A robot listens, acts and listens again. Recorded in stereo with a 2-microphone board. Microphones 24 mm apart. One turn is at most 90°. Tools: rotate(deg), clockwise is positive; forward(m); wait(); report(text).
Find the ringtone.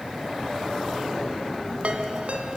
rotate(65)
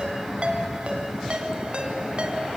rotate(50)
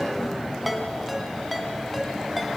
report("Found it: a ringtone, straight ahead, 2 to 4 m away.")